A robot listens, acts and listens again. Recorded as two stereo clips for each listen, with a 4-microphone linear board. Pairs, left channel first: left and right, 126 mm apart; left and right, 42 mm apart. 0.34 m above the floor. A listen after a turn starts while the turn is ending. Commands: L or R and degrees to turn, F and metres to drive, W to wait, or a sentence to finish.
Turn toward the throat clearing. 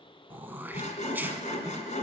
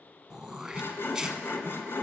R15
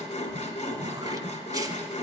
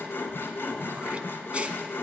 W
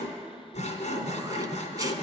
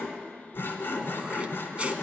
W
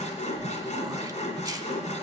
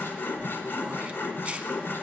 I heard throat clearing, but can't make it out now. It was about straight ahead or 150° right.